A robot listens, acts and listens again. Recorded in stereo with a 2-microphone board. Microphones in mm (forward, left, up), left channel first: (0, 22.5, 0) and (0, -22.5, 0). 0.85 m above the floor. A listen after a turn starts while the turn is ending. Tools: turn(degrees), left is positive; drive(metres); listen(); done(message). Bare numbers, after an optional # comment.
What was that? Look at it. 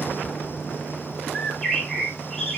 turn(30)
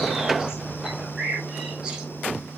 # So it is at 15° right.
turn(-15)
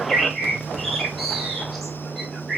done("Facing the bird.")